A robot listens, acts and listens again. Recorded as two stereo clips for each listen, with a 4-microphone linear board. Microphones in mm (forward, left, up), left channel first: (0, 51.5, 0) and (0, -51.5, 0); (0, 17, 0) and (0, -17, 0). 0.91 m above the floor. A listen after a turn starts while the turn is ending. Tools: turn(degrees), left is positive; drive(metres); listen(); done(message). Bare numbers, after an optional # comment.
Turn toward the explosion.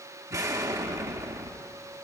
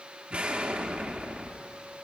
# The explosion: about 35° right or 145° right.
turn(-35)
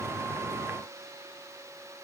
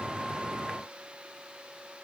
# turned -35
listen()
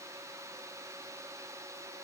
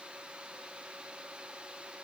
done("I heard an explosion, but can't make it out now. It was about straight ahead or 110° right.")